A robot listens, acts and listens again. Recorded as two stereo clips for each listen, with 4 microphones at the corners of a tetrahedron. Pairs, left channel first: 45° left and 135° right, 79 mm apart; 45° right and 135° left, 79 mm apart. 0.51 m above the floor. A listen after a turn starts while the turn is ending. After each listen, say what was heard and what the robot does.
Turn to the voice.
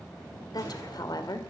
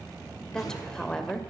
The woman speaking: 35° left. Turn 35° left.
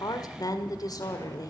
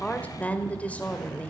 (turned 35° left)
The woman speaking is now 25° left. Turn 25° left.
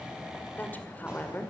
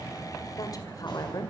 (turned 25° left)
The woman speaking is now 20° right. Turn 20° right.
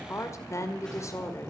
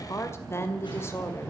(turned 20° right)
Found it: a woman speaking, straight ahead, 1 to 2 m away.